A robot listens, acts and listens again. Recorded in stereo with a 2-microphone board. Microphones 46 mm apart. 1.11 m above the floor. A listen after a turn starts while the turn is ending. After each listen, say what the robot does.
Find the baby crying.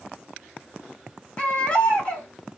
Turn 25° left.
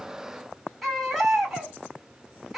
Found it: a baby crying, straight ahead.